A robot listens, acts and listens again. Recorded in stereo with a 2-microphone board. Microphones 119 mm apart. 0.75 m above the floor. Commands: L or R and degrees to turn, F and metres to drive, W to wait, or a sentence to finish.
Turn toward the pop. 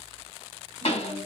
L55
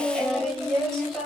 W
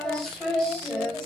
I heard a pop, but can't make it out now. It was about straight ahead or 70° left.